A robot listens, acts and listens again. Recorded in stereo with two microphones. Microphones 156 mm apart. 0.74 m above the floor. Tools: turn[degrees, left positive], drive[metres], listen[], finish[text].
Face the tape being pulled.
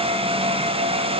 Action: listen[]
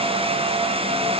Action: listen[]
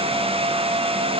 Action: finish[I can't make out tape being pulled to turn to.]